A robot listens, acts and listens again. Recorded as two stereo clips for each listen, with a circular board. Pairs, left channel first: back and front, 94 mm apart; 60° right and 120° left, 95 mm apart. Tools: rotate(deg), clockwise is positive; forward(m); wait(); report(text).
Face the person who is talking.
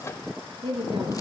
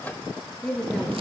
rotate(-20)
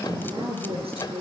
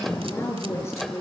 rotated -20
report("Facing the woman speaking.")